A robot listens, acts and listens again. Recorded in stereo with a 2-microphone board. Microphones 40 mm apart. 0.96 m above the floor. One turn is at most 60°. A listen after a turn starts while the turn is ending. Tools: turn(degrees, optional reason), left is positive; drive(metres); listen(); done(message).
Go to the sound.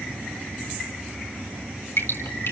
turn(degrees=60, reason="The dripping: about 75° left or 105° left.")
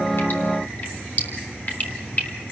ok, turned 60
turn(degrees=40, reason="So it is at 40° left.")
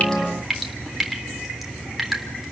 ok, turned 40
drive(metres=1.0)
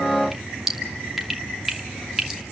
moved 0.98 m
drive(metres=1.0)
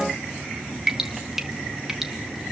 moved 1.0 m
turn(degrees=-10, reason="The dripping is now 10° right.")
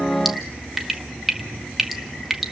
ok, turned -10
drive(metres=1.0)
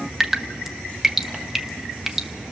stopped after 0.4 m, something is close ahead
turn(degrees=-10, reason="The dripping is now 10° right.")
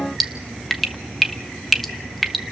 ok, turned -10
done("I am next to the dripping.")